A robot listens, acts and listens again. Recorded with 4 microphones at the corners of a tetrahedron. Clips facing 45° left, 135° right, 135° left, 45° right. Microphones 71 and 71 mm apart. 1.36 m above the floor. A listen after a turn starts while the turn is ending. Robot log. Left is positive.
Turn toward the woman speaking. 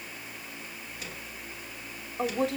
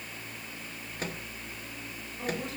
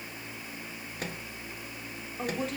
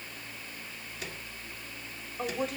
note: The woman speaking: 40° left.
cmd yaw +40
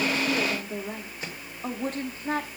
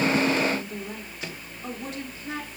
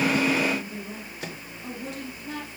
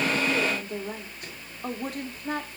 end: Facing the woman speaking, 2 to 4 m away.